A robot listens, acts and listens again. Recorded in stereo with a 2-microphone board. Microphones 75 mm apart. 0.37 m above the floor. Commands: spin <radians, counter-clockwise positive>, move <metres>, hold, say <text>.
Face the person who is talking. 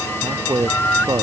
spin -1.13
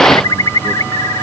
hold
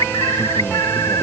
hold
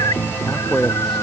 say Found it: a man speaking, straight ahead.